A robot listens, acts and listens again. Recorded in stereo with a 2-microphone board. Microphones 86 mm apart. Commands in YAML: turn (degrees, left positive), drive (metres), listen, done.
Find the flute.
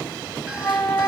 turn: 25
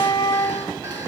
turn: 130
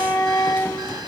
turn: 40
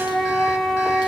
done: "Found it: a flute, straight ahead."